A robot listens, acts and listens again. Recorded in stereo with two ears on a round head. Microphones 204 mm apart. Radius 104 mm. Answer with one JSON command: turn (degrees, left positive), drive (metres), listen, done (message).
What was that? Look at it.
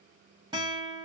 {"turn": -20}
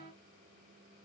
{"listen": true}
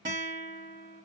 {"turn": -140}
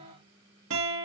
{"turn": -60}
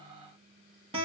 {"turn": -25}
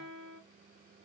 {"done": "Found it: a guitar, straight ahead, 2 to 4 m away."}